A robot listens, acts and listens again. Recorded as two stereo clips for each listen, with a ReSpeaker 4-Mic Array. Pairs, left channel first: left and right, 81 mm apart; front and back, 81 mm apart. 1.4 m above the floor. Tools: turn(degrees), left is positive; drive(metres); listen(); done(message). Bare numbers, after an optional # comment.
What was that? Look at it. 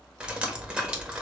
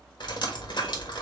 # The dripping: 15° right.
turn(-15)
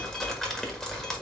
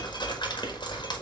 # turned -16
done("Facing the dripping, 1 to 2 m away.")